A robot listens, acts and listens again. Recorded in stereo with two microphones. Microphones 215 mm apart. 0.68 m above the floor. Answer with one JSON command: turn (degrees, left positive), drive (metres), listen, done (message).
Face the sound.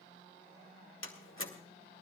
{"turn": 70}
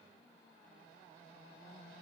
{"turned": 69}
{"listen": true}
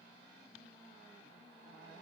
{"done": "I heard a door slam, but can't make it out now. It was about straight ahead or 40° left."}